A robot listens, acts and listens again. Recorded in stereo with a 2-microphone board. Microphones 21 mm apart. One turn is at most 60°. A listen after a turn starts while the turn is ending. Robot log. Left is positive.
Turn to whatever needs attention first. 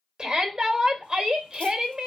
note: The shout: about 40° right or 140° right.
cmd yaw -40
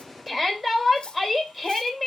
end: Found it: a shout, straight ahead.